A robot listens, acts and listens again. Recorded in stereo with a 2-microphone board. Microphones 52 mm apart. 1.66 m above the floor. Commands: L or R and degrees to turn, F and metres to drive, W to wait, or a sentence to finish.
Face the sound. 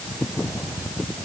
W
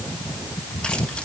W
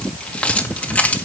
L30
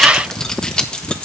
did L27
L15
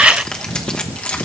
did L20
L25
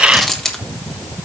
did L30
L10
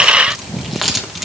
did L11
Found it: keys jangling, straight ahead, 1 to 2 m away.